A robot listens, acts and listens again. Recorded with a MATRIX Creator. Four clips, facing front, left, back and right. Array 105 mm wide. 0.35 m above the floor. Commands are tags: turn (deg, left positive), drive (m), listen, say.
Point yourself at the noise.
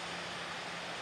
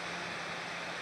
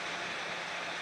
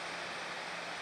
<listen/>
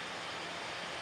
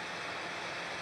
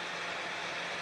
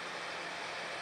<listen/>
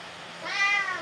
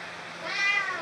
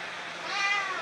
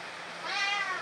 <turn deg="40"/>
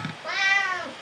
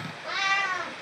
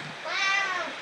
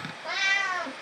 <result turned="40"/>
<turn deg="-10"/>
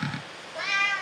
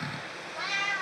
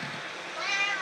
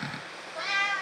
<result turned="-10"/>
<turn deg="-10"/>
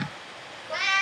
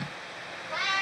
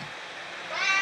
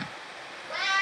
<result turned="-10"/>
<turn deg="-15"/>
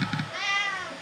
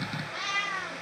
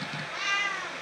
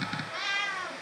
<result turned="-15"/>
<say>Facing the cat meowing, 2 to 4 m away.</say>